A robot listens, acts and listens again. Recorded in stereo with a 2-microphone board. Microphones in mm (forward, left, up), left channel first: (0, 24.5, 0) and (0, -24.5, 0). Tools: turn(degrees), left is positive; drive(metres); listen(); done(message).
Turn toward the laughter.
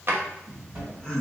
turn(degrees=30)
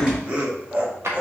turn(degrees=-35)
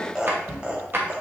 turn(degrees=-25)
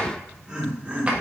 turn(degrees=-25)
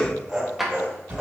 turn(degrees=-15)
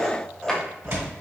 done("Found it: laughter, straight ahead.")